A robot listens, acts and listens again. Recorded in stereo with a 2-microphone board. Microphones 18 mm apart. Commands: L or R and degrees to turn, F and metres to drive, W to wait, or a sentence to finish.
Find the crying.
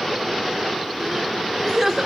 R30
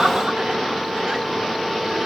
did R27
W
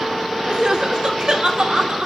R120
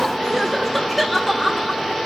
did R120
Facing the crying.